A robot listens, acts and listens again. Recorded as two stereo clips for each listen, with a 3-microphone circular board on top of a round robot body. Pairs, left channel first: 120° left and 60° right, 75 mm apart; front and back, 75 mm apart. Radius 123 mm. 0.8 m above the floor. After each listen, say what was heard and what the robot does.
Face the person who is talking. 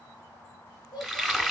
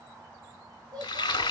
The child speaking: 145° left. Turn 145° left.
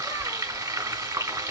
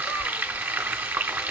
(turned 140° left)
Keep listening.
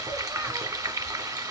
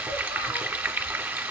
Keep listening.
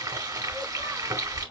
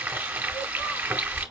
Facing where the child speaking came from. I can't hear it now.